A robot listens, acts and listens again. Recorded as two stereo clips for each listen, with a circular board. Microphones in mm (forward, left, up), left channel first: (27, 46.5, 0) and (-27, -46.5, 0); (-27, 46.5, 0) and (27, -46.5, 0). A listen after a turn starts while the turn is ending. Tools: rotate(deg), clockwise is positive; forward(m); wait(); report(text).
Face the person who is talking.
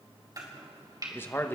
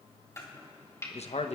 rotate(-130)
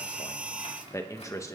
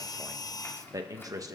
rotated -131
report("Facing the man speaking.")